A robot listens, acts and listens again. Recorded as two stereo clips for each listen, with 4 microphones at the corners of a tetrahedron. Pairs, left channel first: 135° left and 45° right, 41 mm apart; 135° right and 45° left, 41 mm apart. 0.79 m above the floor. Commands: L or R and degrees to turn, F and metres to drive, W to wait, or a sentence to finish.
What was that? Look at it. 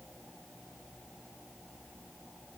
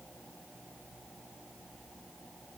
W
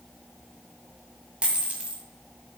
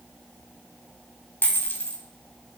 R105
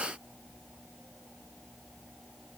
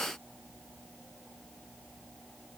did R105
Facing where the dropped coin came from. I can't hear it now.